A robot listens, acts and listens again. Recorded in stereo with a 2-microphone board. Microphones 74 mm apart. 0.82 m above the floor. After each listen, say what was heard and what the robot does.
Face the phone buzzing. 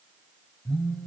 The phone buzzing: about 20° left or 160° left. Turn 20° left.
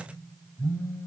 So it is at 145° left. Turn 145° left.
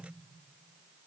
Keep listening.
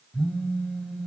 Found it: a phone buzzing, straight ahead, 2 to 4 m away.